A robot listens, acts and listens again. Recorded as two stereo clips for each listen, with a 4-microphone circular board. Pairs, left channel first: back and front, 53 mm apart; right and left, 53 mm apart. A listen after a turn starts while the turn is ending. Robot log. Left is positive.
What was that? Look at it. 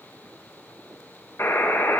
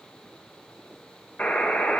note: The buzzer: 150° right.
cmd yaw -150
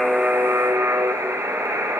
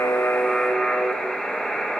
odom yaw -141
note: The buzzer is now 10° right.
cmd yaw -10
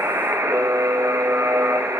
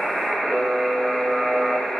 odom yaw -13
end: Found it: a buzzer, straight ahead, 1 to 2 m away.